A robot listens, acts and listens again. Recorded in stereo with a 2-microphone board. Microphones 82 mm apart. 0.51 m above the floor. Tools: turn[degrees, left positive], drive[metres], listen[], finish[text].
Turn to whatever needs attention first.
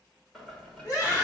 Thought: The scream: about 45° left or 135° left.
Action: turn[45]
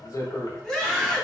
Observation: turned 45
Thought: So it is at 10° left.
Action: turn[10]
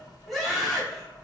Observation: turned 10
Action: finish[Facing the scream.]